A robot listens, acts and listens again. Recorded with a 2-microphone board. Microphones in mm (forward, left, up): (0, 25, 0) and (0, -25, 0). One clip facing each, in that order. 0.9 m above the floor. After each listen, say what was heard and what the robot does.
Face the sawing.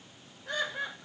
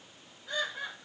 Keep listening.
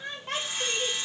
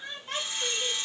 The sawing: about 70° left or 110° left. Turn 70° left.
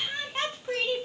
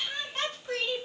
Keep listening.
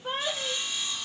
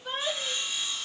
Found it: sawing, straight ahead.